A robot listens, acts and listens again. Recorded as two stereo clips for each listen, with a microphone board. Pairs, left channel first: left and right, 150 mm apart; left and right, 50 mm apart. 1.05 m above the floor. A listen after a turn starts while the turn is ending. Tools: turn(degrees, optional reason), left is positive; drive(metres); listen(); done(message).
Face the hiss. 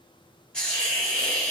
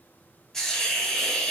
turn(degrees=30)
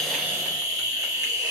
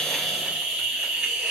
turn(degrees=-25, reason="So it is at 25° right.")
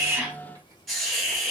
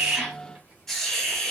done("Found it: a hiss, straight ahead.")